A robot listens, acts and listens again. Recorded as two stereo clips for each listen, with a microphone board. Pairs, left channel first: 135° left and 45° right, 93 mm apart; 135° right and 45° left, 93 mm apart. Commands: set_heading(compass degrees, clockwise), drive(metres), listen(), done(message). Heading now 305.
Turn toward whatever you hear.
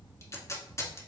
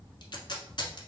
set_heading(115)
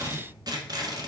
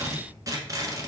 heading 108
done("Facing the tape being pulled.")